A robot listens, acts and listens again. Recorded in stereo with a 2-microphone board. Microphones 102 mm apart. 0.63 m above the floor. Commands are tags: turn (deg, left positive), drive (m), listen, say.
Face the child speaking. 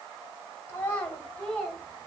<turn deg="30"/>
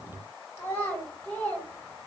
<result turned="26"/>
<turn deg="15"/>
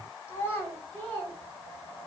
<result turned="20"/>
<turn deg="20"/>
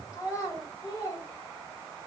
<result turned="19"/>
<turn deg="150"/>
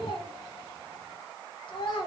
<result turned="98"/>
<turn deg="50"/>
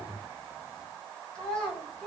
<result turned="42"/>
<turn deg="10"/>
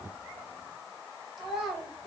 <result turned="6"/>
<say>Facing the child speaking, 2 to 4 m away.</say>